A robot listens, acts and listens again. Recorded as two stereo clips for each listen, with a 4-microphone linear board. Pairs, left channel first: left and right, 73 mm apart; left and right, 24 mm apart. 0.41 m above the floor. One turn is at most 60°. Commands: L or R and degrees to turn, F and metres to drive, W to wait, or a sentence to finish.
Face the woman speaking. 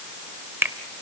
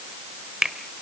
W
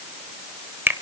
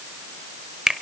W
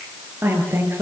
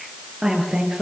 R35
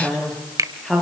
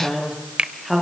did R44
Found it: a woman speaking, straight ahead, over 4 m away.